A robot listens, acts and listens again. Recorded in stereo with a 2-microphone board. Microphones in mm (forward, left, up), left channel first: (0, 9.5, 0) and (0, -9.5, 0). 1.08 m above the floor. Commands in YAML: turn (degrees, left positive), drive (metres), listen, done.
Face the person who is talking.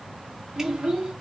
turn: -65
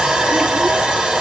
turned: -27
listen: true
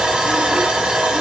listen: true
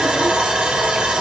done: "I heard a child speaking, but can't make it out now. It was about 40° right or 85° right."